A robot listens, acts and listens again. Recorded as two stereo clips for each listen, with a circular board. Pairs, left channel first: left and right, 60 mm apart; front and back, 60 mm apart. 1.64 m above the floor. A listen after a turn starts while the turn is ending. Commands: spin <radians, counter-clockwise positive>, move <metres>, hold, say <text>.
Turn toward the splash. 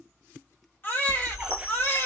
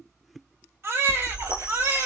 spin -2.71
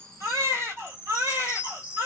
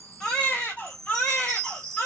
say I heard a splash from this way, but can't make it out now.